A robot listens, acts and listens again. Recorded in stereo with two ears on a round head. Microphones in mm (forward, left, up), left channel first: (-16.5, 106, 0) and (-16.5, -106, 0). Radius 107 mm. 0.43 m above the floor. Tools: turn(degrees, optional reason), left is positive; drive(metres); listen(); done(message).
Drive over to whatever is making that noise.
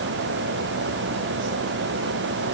listen()
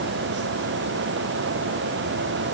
listen()
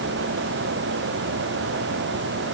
done("I can't make out anything to turn to.")